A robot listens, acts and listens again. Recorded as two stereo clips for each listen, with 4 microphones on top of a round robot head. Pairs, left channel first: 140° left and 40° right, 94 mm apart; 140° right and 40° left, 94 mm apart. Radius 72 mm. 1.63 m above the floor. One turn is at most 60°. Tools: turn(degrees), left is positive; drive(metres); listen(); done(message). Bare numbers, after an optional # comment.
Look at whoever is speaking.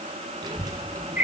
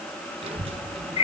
# The child speaking: 20° left.
turn(20)
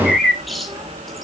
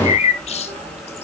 # The child speaking is now 25° left.
turn(25)
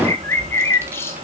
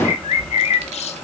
# The child speaking is now 30° left.
turn(30)
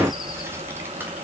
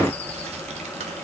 # The child speaking is now 35° left.
turn(35)
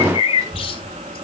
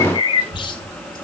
# The child speaking is now 25° left.
turn(25)
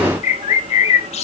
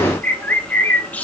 done("Facing the child speaking.")